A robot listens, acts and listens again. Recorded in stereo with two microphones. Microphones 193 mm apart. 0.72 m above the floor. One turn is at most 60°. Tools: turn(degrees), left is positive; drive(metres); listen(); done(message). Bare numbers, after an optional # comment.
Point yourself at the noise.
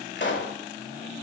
# The pop: about 75° left or 105° left.
turn(60)
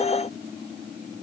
listen()
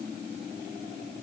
done("I heard a pop, but can't make it out now. It was about 15° left or 45° left.")